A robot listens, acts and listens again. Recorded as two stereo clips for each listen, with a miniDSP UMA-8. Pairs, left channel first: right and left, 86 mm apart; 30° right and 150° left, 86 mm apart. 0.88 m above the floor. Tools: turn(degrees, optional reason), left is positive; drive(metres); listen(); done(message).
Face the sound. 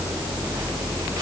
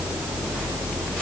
listen()
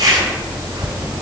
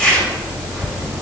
turn(degrees=50, reason="The zipper: 50° left.")
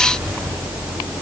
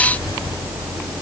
listen()
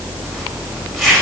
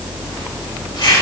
done("Found it: a zipper, straight ahead.")